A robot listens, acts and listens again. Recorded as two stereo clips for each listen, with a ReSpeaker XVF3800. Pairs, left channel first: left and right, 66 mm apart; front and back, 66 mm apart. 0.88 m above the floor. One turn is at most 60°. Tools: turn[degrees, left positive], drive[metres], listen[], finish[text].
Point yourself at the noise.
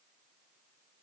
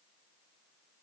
Action: listen[]
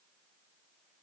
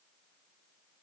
Action: listen[]
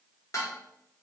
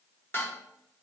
Thought: The dishes clattering: 50° left.
Action: turn[50]
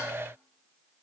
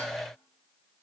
Action: listen[]
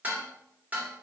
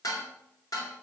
Thought: The dishes clattering is now 25° right.
Action: turn[-25]
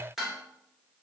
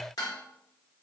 Action: finish[Facing the dishes clattering, 1 to 2 m away.]